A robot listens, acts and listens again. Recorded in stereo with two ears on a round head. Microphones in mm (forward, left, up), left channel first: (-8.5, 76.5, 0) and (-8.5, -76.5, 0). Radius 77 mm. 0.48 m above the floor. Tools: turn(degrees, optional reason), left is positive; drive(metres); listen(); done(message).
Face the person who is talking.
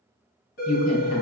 turn(degrees=40, reason="The woman speaking: about 40° left or 140° left.")
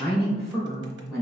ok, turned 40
done("Facing the woman speaking, 1 to 2 m away.")